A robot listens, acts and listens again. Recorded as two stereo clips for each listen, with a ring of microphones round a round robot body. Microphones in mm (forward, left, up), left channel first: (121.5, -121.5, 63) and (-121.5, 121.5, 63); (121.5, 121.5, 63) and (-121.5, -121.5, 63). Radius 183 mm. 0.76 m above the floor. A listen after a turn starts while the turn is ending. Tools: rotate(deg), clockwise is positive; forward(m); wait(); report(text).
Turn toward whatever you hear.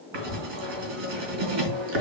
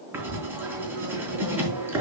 rotate(-140)
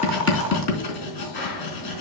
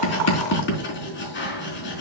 rotate(15)
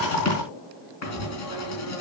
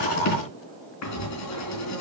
report("Facing the writing.")